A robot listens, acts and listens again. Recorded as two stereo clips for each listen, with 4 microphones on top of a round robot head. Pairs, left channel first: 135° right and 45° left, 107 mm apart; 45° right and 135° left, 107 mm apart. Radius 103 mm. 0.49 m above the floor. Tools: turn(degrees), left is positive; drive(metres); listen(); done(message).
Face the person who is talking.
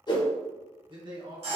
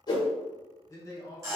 turn(degrees=10)
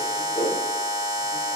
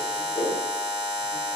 listen()
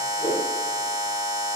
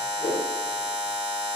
listen()
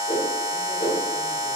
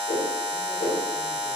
done("Facing where the man speaking came from. I can't hear it now.")